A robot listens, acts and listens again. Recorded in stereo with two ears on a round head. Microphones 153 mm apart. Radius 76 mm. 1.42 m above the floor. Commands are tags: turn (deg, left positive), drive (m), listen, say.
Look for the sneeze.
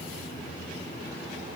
<listen/>
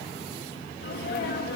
<turn deg="60"/>
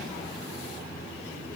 <listen/>
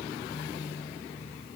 <say>I heard a sneeze, but can't make it out now. It was about straight ahead or 60° left.</say>